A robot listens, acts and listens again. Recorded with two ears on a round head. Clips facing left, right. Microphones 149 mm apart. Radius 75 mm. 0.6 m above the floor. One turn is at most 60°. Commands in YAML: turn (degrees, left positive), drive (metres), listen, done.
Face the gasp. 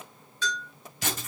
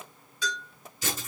listen: true
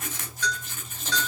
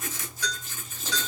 listen: true
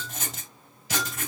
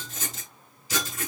done: "I can't make out a gasp, only a bell and writing."